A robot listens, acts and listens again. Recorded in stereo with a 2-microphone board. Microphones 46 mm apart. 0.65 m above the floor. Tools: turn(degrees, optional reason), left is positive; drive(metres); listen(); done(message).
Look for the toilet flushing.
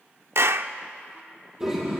turn(degrees=-30)
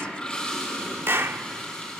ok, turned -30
turn(degrees=20, reason="So it is at 20° left.")
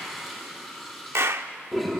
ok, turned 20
done("Found it: a toilet flushing, straight ahead.")